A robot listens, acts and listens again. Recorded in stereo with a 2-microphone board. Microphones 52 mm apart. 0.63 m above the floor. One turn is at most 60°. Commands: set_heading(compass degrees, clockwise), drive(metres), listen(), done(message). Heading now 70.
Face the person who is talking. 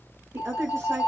set_heading(130)
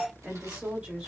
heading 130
set_heading(170)
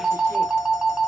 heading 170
listen()
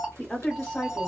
done("Found it: a woman speaking, straight ahead.")